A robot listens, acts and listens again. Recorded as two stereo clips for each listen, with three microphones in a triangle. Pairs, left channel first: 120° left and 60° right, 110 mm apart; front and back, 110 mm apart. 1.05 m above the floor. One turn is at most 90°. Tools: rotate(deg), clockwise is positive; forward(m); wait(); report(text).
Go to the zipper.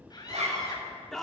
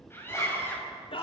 rotate(65)
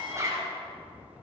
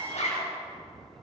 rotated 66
forward(1.0)
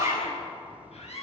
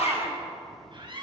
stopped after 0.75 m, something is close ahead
report("Blocked. The zipper is further on, straight ahead.")